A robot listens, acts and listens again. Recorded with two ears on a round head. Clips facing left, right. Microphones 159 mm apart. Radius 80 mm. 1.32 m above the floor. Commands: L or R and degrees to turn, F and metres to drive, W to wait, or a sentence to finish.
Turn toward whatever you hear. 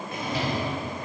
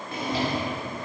R30
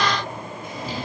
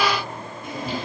R120
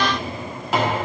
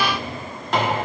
Found it: a drawer, straight ahead, 1 to 2 m away.